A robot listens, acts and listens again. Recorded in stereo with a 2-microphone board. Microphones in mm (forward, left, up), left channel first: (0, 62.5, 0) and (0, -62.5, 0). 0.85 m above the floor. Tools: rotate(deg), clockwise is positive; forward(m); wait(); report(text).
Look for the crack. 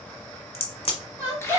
rotate(-50)
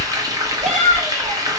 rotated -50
wait()
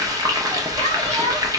report("I heard a crack, but can't make it out now. It was about straight ahead or 80° left.")